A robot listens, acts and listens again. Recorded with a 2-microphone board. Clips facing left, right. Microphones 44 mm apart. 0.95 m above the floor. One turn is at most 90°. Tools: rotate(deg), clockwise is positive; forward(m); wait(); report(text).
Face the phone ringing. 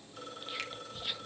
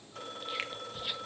rotate(90)
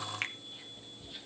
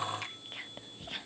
wait()
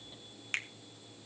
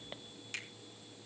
wait()
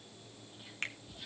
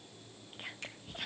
report("Facing where the phone ringing came from. I can't hear it now.")